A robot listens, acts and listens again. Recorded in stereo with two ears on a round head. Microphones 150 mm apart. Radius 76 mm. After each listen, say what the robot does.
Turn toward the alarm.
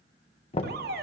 Turn 70° right.
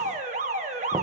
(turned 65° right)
Turn 45° right.
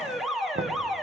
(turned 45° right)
Found it: an alarm, straight ahead, 1 to 2 m away.